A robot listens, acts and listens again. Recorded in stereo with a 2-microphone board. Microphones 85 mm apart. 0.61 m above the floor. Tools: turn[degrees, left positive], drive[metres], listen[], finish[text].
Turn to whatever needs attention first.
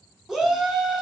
Action: turn[-30]
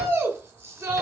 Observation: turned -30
Thought: So it is at 140° right.
Action: turn[-140]
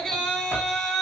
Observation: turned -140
Thought: The shout is now 10° left.
Action: turn[10]
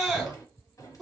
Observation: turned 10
Action: finish[Facing the shout, 1 to 2 m away.]